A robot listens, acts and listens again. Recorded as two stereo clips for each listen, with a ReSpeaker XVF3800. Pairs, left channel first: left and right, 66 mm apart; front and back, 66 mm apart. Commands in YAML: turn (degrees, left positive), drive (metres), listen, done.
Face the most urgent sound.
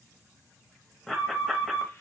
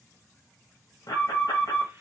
done: "Found it: an alarm, straight ahead."